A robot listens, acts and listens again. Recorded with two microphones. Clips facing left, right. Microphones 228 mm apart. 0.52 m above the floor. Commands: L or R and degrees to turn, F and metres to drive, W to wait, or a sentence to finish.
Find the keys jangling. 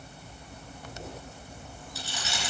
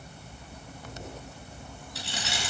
R65
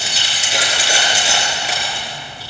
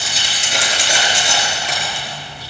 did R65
L10
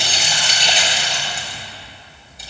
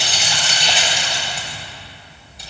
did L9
Found it: keys jangling, straight ahead.